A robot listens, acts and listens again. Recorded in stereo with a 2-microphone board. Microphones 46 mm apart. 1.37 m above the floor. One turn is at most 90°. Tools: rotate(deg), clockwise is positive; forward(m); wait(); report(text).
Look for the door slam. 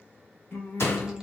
rotate(-75)
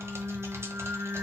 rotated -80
wait()
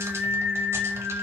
report("I heard a door slam, but can't make it out now. It was about 5° right or 25° left.")